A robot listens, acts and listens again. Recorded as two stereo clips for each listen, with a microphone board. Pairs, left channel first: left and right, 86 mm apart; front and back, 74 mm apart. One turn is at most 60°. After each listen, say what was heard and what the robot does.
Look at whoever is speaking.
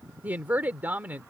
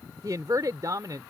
The woman speaking: 155° right. Turn 60° right.
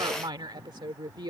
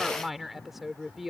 The woman speaking is now 90° right. Turn 60° right.
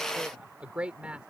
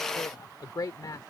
The woman speaking is now 15° right. Turn 15° right.
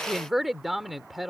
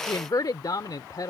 Facing the woman speaking.